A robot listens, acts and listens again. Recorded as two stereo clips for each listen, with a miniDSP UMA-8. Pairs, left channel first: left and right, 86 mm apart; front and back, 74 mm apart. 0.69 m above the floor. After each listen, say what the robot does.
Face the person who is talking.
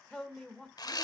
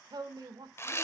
Turn 170° left.
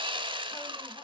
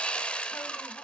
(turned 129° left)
Turn 40° left.
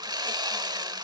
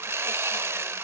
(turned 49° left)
Keep listening.
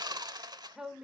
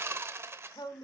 Found it: a woman speaking, straight ahead.